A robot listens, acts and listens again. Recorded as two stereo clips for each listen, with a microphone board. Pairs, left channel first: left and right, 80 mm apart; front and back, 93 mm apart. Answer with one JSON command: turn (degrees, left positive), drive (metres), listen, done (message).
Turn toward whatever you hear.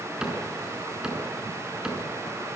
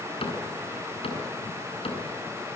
{"turn": -10}
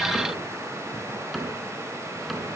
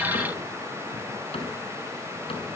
{"done": "Found it: a cupboard door, straight ahead."}